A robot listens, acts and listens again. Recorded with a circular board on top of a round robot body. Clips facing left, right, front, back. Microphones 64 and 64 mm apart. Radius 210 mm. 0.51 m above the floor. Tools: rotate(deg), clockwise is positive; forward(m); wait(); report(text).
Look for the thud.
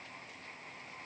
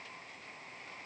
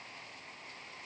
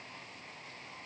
wait()
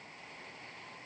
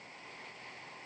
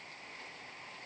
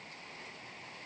wait()
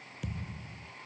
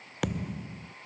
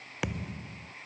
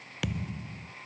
rotate(65)
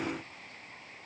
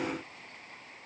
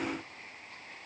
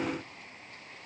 report("Facing where the thud came from. I can't hear it now.")